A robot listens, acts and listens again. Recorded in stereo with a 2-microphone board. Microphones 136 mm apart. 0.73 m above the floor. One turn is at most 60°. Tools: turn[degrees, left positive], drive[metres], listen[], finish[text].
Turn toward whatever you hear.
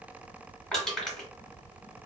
Action: turn[30]
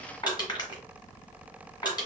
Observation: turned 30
Thought: So it is at 145° left.
Action: turn[60]
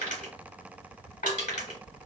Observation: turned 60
Thought: The crushing is now 90° left.
Action: turn[60]
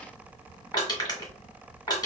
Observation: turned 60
Thought: The crushing is now 30° left.
Action: turn[30]
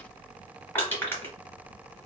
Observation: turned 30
Thought: The crushing is now 20° left.
Action: turn[20]
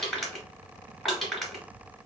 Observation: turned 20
Action: finish[Facing the crushing.]